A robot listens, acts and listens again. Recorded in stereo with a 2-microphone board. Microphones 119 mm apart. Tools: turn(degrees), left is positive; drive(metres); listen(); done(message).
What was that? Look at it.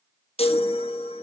turn(degrees=55)
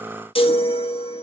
turn(degrees=60)
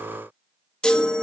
turn(degrees=10)
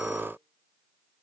listen()
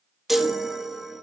done("Found it: a chime, straight ahead, 1 to 2 m away.")